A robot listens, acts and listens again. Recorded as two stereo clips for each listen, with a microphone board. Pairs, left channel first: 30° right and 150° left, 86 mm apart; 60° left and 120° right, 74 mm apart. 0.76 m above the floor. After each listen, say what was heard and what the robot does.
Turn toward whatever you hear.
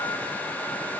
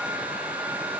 Keep listening.
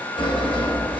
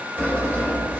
The sawing: 55° right. Turn 55° right.
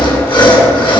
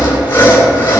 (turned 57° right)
Found it: sawing, straight ahead, 2 to 4 m away.